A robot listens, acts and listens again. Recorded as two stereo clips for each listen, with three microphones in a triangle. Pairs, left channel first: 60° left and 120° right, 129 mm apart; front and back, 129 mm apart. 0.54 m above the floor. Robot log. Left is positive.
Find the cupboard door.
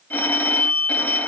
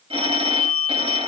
cmd idle
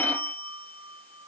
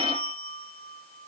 cmd idle
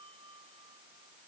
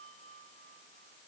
end: I can't make out a cupboard door, only a phone ringing.